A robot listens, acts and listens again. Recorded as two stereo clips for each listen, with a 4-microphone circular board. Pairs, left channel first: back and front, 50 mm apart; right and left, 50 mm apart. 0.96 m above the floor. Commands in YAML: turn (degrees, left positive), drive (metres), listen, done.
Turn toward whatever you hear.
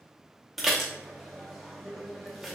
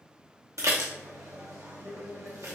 turn: 90
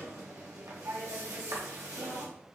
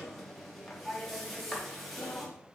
done: "Facing the dishes clattering, under 1 m away."